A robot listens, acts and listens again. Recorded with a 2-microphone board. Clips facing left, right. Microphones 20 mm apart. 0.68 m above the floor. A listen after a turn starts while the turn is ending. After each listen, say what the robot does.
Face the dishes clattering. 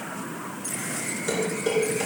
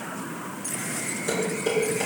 Turn 30° left.
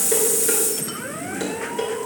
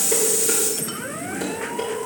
Turn 145° left.
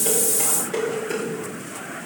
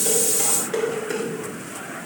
Turn 15° right.
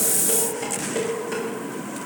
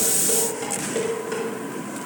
Found it: dishes clattering, straight ahead.